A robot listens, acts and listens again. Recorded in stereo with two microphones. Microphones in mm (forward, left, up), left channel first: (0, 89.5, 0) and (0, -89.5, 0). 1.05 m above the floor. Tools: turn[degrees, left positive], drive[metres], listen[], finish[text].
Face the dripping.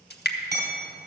Thought: The dripping: about 65° left or 115° left.
Action: turn[65]
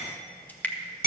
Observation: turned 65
Thought: So it is at 10° left.
Action: turn[10]
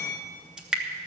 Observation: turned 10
Action: finish[Found it: dripping, straight ahead.]